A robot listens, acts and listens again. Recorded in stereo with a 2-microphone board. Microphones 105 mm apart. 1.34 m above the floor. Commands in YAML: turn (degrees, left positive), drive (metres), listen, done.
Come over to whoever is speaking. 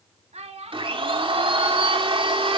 turn: -90
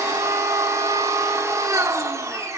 listen: true
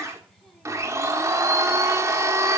listen: true
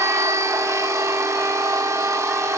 done: "I heard a child speaking from this way, but can't make it out now. I did not reach it."